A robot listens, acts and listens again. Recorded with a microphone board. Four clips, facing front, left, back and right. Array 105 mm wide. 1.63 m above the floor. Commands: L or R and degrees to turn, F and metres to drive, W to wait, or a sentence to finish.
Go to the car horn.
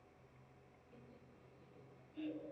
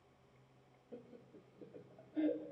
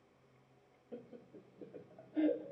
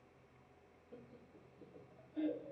W
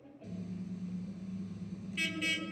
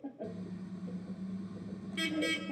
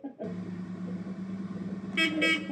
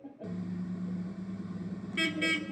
R160
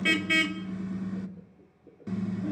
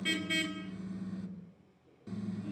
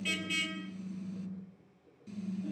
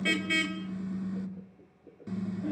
R20
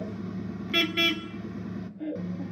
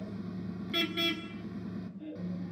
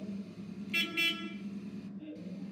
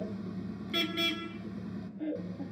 F1.0
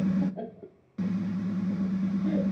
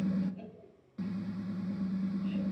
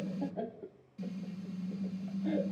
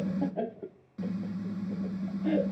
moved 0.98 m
F1.0
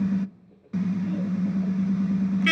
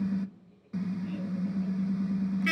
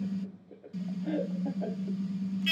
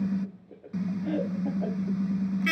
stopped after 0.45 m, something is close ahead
R10
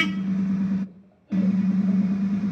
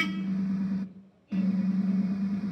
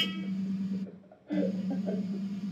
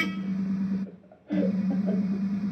I am next to the car horn.